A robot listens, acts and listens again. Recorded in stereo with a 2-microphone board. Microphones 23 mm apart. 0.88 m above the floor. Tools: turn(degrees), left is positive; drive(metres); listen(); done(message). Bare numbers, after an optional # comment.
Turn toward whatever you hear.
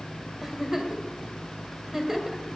turn(-30)
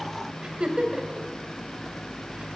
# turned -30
# So it is at 135° right.
turn(-135)
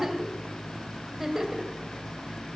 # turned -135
# The giggle is now 20° right.
turn(-20)
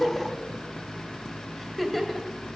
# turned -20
done("Found it: a giggle, straight ahead, 2 to 4 m away.")